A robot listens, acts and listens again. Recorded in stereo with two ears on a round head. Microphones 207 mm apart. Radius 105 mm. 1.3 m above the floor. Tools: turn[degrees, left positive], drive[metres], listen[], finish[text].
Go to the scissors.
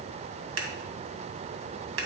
Thought: The scissors: about 65° right or 115° right.
Action: turn[-65]
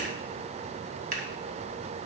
Thought: So it is at 40° right.
Action: turn[-40]
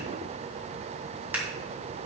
Thought: The scissors is now 10° right.
Action: turn[-10]
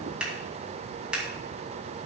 Action: drive[1.0]
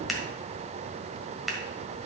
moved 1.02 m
Action: drive[1.0]
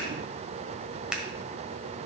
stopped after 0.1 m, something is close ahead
Action: finish[I am next to the scissors.]